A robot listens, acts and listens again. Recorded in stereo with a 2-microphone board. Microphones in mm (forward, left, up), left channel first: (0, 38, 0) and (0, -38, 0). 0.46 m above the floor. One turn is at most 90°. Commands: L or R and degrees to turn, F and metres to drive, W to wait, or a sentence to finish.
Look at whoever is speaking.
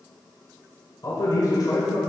L50
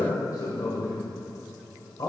L70
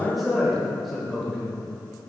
Facing the man speaking, 1 to 2 m away.